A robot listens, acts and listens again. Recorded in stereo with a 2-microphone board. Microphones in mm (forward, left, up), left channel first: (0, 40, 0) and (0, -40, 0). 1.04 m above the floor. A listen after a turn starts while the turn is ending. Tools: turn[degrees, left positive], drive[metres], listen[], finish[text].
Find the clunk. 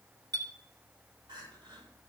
Action: listen[]
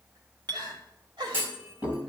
Thought: The clunk: about 30° right or 150° right.
Action: turn[-30]
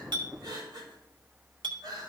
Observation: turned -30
Action: listen[]
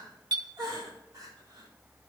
Action: finish[I heard a clunk, but can't make it out now. It was about straight ahead or 120° right.]